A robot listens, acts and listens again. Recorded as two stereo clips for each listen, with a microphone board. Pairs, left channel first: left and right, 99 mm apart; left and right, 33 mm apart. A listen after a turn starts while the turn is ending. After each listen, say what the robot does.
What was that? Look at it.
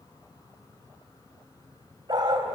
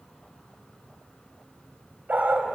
Turn 50° right.
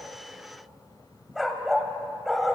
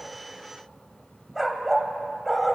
Found it: a dog barking, straight ahead, 1 to 2 m away.